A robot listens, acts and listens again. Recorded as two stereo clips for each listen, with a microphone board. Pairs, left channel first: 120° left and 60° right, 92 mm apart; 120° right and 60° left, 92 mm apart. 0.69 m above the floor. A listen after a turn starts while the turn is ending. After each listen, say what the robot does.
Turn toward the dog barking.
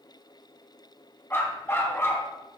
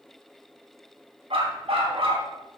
Turn 55° left.
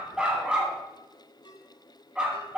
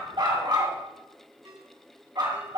Turn 20° left.
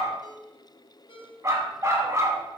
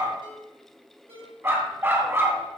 Facing the dog barking.